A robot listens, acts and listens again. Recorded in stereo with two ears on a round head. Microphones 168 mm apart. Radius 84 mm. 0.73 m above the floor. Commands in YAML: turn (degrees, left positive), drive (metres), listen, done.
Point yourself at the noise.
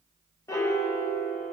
turn: 15
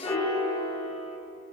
turn: 155
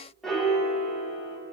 done: "Found it: a piano, straight ahead, 1 to 2 m away."